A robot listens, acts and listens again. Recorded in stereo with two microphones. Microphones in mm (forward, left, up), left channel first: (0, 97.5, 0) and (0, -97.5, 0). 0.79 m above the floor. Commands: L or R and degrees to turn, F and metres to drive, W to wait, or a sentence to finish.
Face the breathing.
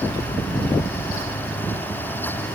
W
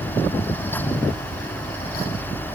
W
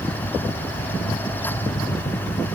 I can't make out breathing to turn to.